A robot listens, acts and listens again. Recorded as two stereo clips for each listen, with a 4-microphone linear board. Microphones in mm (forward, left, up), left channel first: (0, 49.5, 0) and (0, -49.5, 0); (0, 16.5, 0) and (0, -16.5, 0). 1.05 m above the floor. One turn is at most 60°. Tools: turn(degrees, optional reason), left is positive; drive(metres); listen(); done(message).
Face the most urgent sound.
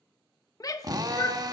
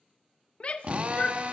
turn(degrees=40, reason="The shout: about 40° left or 140° left.")
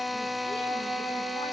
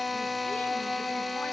listen()
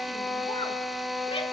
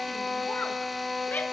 listen()
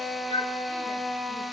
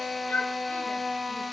turn(degrees=60, reason="So it is at 100° left.")
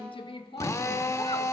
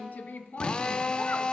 turn(degrees=60, reason="The shout is now 70° left.")
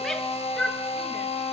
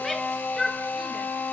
done("Facing the shout, 1 to 2 m away.")